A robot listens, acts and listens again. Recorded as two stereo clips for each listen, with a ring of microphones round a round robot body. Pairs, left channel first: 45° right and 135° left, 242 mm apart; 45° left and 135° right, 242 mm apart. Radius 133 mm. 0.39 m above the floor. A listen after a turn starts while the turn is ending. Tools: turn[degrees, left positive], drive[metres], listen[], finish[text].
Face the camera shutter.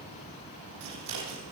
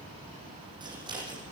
Action: listen[]
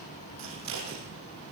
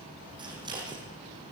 Action: listen[]
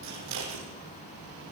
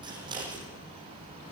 Action: finish[I can't make out a camera shutter to turn to.]